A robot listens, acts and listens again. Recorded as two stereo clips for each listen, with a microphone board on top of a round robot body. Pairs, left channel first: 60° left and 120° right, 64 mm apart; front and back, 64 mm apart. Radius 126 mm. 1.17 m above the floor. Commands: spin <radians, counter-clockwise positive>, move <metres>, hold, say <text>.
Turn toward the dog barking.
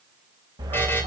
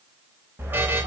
spin -2.18
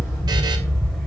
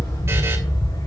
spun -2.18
spin -0.44
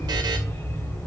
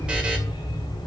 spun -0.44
spin -0.17
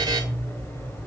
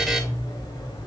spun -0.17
say Found it: a dog barking, straight ahead, 2 to 4 m away.